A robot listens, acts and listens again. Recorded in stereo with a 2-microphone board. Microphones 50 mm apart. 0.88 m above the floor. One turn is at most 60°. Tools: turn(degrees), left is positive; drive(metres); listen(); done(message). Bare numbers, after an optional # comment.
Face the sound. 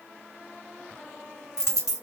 # The dropped coin: about 70° left or 110° left.
turn(60)
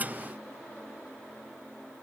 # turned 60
listen()
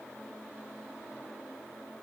done("I heard a dropped coin, but can't make it out now. It was about 10° left or 50° left.")